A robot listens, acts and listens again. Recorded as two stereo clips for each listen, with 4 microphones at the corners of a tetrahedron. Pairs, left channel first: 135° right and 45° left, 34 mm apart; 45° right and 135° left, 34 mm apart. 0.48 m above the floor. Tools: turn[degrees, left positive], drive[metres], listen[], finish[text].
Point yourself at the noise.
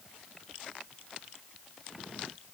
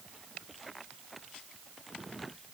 Action: listen[]
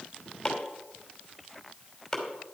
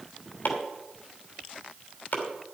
Thought: The chopping: 55° right.
Action: turn[-55]
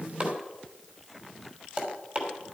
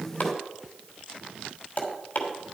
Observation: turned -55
Action: finish[Found it: chopping, straight ahead.]